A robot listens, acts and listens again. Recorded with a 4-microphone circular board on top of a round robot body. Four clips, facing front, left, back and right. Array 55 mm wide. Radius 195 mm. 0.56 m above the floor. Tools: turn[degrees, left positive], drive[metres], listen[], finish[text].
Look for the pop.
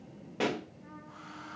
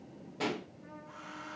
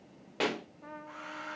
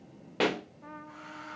Thought: The pop: 105° right.
Action: turn[-105]
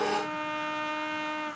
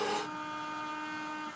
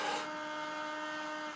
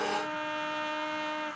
Action: finish[I heard a pop from this way, but can't make it out now.]